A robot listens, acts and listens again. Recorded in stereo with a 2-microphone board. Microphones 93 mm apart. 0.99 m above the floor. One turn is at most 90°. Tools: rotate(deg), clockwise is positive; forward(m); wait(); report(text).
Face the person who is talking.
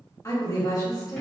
rotate(-35)
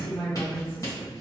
rotate(-90)
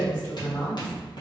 rotate(-25)
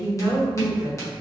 report("Found it: a woman speaking, straight ahead, 1 to 2 m away.")